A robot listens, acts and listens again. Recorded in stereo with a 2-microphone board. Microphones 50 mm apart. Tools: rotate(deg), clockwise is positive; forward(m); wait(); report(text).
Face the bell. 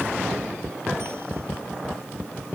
wait()
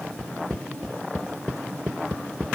wait()
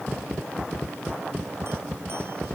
report("I can't make out a bell.")